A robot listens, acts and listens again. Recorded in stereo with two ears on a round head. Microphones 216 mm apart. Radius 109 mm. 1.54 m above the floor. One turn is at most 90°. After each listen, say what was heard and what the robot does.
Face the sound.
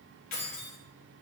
Turn 90° left.
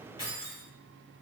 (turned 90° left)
So it is at 20° left. Turn 20° left.
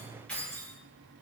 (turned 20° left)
Found it: keys jangling, straight ahead, over 4 m away.